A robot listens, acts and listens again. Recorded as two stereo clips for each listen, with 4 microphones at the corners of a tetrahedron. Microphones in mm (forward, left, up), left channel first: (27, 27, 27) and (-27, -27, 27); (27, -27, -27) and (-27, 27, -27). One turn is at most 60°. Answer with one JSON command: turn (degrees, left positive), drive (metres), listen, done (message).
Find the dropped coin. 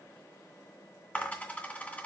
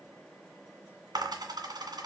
{"turn": 60}
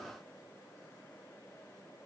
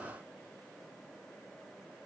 {"turn": 55}
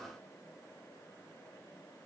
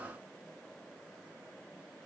{"done": "Facing where the dropped coin came from. I can't hear it now."}